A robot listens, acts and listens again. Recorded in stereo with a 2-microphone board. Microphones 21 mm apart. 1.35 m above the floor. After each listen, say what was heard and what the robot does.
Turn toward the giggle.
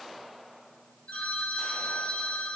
Keep listening.
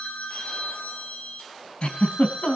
The giggle: about 50° left or 130° left. Turn 50° left.
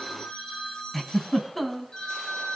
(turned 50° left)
Found it: a giggle, straight ahead.